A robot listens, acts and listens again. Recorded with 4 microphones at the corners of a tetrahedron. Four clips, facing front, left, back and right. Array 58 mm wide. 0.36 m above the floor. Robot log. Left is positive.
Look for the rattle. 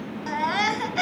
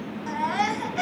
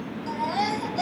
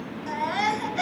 cmd idle
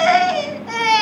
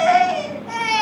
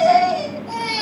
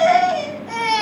cmd idle
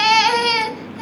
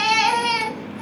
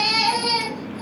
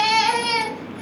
end: I can't make out a rattle to turn to.